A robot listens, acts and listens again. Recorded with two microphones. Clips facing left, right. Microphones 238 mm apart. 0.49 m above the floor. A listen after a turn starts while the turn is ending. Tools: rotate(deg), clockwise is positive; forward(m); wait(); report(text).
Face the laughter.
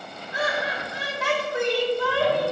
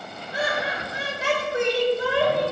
rotate(20)
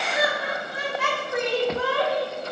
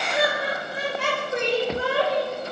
rotate(25)
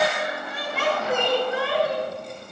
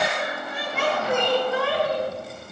rotate(140)
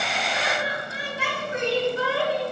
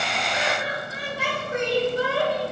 rotate(45)
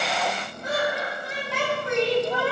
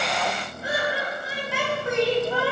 rotate(10)
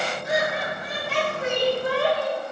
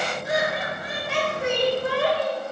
report("Facing the laughter, 2 to 4 m away.")